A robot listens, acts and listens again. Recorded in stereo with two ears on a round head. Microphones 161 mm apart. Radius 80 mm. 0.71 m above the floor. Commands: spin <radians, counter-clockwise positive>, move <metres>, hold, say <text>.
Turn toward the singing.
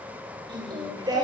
spin -0.35
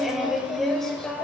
say Facing the singing, 2 to 4 m away.